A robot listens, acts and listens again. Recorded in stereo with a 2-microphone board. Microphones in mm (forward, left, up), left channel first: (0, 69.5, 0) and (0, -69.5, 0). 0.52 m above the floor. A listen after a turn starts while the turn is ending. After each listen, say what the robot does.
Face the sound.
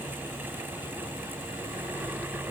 Keep listening.
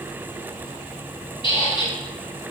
Turn 35° left.
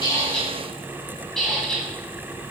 Facing the squeak, under 1 m away.